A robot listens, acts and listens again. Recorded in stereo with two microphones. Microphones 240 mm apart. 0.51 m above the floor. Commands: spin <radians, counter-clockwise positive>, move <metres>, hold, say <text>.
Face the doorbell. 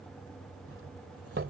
spin -1.05
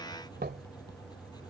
spin -0.87
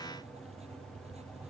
hold
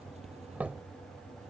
say Found it: a doorbell, straight ahead.